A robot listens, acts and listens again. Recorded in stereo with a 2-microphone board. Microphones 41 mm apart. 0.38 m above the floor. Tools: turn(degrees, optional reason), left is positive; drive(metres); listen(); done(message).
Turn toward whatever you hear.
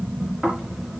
turn(degrees=30)
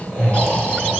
turn(degrees=145, reason="So it is at 145° left.")
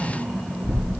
done("Facing the snoring.")